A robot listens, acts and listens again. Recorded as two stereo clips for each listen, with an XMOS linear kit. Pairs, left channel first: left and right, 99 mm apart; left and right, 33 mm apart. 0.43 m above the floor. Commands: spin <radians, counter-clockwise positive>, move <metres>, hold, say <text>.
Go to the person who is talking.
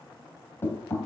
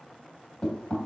hold
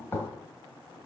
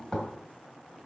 hold
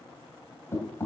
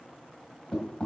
say I can't make out anyone speaking, only knocking.